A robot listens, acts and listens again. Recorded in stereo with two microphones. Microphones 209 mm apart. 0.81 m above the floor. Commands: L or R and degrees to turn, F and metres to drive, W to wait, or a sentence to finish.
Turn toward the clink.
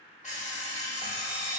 W
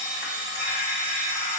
W
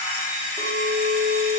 R30
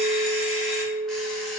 L25
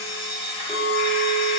Facing the clink, 1 to 2 m away.